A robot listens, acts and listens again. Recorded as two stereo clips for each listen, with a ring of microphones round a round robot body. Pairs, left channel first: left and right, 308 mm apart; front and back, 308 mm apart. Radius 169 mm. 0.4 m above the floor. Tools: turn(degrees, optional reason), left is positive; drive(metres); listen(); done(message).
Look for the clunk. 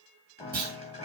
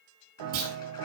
turn(degrees=-155, reason="The clunk: 155° right.")
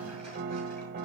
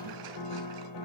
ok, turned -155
done("Facing where the clunk came from. I can't hear it now.")